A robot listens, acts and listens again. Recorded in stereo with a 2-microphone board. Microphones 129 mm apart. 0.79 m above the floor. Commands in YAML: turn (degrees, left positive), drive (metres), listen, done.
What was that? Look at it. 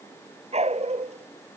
turn: -60
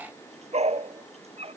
turn: -55
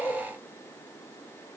turn: 15
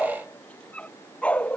turn: 10
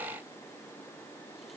listen: true
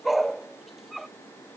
done: "Found it: a dog barking, straight ahead."